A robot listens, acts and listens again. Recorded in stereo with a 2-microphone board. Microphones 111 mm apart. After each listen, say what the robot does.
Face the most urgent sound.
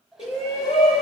Turn 90° left.
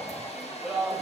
Found it: a shout, straight ahead.